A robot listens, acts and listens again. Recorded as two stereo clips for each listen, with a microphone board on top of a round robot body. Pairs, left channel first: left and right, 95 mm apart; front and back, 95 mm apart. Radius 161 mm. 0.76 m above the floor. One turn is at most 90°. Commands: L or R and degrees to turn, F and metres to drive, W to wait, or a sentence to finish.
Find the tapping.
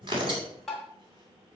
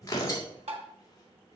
L90
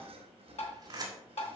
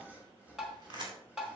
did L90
L90
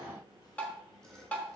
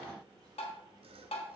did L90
L15
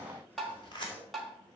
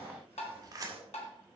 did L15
Found it: tapping, straight ahead, 1 to 2 m away.